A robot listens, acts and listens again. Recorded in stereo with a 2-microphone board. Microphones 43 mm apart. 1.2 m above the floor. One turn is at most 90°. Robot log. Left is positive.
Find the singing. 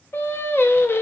note: The singing: about 70° left or 110° left.
cmd yaw +70
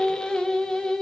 note: So it is at 15° left.
cmd yaw +15
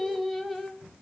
end: Facing the singing, 1 to 2 m away.